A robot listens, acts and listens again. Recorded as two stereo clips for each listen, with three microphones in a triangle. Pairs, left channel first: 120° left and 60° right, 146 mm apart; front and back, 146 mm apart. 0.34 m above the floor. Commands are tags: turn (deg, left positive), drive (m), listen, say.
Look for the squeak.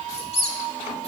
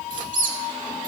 <turn deg="165"/>
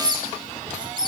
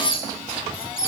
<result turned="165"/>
<say>Found it: a squeak, straight ahead.</say>